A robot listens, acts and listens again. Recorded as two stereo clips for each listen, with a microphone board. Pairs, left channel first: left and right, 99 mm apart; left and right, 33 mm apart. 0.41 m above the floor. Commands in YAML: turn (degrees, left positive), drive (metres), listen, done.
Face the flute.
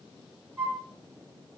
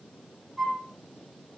turn: -30
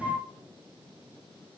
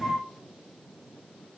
turn: 25
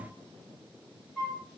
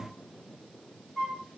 turn: 10
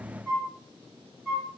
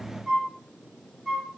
done: "Found it: a flute, straight ahead, 1 to 2 m away."